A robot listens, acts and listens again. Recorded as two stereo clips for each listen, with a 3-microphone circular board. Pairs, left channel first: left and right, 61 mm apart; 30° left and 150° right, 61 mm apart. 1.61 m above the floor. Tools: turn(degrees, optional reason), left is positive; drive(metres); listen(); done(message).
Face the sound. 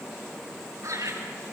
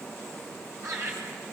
turn(degrees=-120, reason="The laughter: 120° right.")
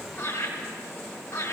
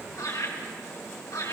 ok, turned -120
turn(degrees=35, reason="The laughter is now 35° left.")
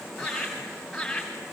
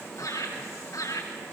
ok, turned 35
done("Found it: laughter, straight ahead.")